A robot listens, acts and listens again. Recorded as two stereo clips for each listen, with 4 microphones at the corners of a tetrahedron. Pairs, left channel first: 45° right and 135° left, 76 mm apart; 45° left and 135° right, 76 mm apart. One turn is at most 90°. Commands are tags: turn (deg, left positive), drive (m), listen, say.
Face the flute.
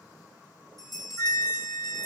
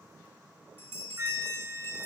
<turn deg="-75"/>
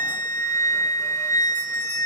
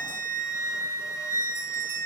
<say>Facing the flute.</say>